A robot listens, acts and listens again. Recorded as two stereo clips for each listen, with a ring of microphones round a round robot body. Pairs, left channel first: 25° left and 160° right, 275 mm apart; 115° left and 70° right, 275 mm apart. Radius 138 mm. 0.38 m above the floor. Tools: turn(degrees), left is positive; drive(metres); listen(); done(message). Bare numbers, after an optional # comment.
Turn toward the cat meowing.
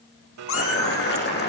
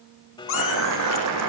# The cat meowing: 65° left.
turn(65)
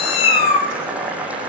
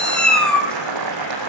# The cat meowing is now 25° left.
turn(25)
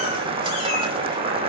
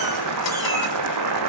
listen()
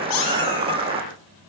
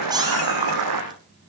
# The cat meowing is now 10° left.
turn(10)
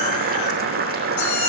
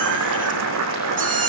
done("Found it: a cat meowing, straight ahead, over 4 m away.")